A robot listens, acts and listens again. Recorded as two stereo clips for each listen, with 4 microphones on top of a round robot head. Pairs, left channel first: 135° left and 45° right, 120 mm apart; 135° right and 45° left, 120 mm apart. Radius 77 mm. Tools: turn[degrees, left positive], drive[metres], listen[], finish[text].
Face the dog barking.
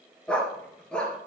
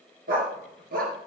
Thought: The dog barking: 50° left.
Action: turn[50]
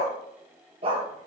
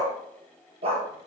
Action: finish[Facing the dog barking, 2 to 4 m away.]